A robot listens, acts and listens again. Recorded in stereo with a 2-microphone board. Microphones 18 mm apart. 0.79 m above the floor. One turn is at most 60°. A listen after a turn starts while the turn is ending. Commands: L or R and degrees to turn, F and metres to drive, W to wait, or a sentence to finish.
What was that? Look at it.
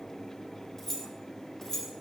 L25
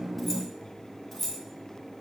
L15
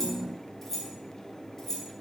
L20
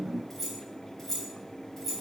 L30
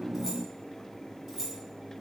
R20
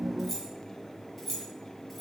Found it: keys jangling, straight ahead.